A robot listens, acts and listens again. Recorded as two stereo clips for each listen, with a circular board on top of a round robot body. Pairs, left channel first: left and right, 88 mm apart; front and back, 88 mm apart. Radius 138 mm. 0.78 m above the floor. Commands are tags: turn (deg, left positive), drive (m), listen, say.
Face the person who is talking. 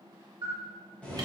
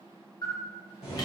<listen/>
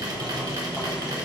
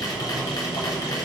<listen/>
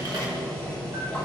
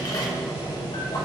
<say>I can't make out anyone speaking, only boiling and a camera shutter.</say>